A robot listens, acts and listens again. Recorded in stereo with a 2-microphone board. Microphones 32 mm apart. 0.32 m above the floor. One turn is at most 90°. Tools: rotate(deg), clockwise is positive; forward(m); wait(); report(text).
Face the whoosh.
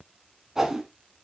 rotate(15)
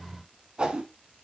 rotate(90)
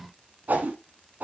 rotate(75)
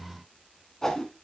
rotate(-15)
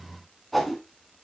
report("Found it: a whoosh, straight ahead.")